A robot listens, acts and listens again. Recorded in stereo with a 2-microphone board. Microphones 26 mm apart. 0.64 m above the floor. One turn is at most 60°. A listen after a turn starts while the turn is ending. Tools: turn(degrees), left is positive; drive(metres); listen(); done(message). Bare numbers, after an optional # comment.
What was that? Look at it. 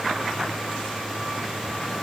listen()
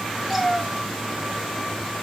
turn(-30)
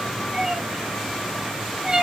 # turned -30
# So it is at 145° right.
turn(-60)
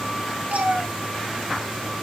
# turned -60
# The cat meowing is now 100° right.
turn(-60)
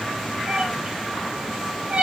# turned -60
# The cat meowing is now 55° right.
turn(-55)
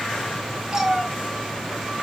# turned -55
# The cat meowing is now 20° right.
turn(-20)
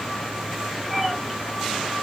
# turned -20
done("Found it: a cat meowing, straight ahead.")